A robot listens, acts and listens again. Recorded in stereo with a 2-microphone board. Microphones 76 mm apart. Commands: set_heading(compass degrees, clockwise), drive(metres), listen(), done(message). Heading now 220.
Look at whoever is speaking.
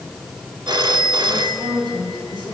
set_heading(290)
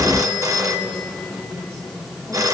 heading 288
done("Facing the woman speaking, over 4 m away.")